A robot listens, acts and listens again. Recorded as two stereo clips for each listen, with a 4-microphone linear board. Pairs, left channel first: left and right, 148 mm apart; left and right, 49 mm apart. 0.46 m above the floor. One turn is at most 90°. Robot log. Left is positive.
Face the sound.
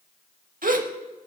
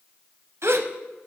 note: The gasp: about 70° right or 110° right.
cmd yaw -70
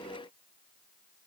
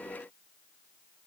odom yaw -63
cmd idle
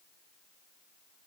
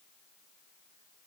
end: I heard a gasp, but can't make it out now. It was about 5° right or 50° right.